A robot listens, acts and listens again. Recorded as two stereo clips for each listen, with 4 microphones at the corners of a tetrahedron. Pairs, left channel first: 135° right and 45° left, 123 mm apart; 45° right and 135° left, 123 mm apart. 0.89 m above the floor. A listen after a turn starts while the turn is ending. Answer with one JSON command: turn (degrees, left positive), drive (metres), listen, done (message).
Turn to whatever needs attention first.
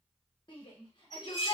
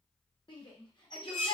{"turn": -90}
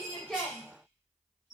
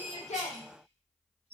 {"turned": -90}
{"listen": true}
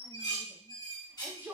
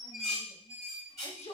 {"turn": -30}
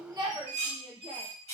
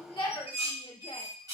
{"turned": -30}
{"done": "Found it: a shout, straight ahead, under 1 m away."}